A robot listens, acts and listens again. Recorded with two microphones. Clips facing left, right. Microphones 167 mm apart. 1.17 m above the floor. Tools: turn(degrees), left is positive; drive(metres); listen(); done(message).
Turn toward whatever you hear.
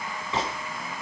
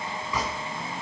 turn(degrees=30)
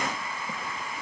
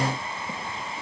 listen()
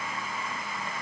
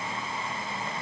done("I heard a gunshot, but can't make it out now. It was about straight ahead or 120° left.")